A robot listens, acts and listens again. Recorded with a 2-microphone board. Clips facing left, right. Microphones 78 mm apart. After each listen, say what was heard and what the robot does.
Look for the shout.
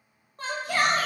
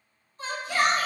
The shout: about 55° left or 125° left. Turn 55° left.
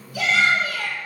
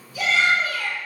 So it is at 70° left. Turn 70° left.
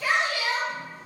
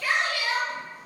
The shout is now 20° left. Turn 20° left.
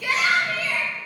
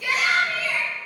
Found it: a shout, straight ahead.